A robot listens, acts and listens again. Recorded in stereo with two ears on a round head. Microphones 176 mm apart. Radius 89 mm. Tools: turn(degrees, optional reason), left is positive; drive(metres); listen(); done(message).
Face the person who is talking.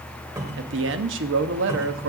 turn(degrees=-65, reason="The man speaking: about 65° right or 115° right.")
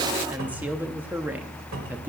turn(degrees=-10, reason="So it is at 10° right.")
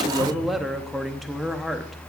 done("Facing the man speaking.")